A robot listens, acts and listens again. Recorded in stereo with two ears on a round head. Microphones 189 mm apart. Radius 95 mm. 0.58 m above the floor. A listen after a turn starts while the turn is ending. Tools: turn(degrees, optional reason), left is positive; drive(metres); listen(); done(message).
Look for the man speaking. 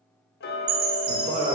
turn(degrees=-25, reason="The man speaking: about 25° right or 155° right.")
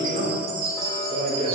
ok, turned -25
turn(degrees=-25, reason="The man speaking: about 25° right or 155° right.")
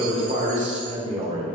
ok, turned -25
turn(degrees=-25, reason="The man speaking: about 25° right or 155° right.")
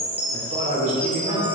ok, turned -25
turn(degrees=-30, reason="The man speaking: about 30° right or 150° right.")
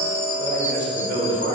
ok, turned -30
turn(degrees=-130, reason="So it is at 130° right.")
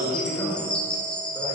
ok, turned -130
turn(degrees=15, reason="The man speaking is now 15° left.")
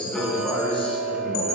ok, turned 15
done("Facing the man speaking.")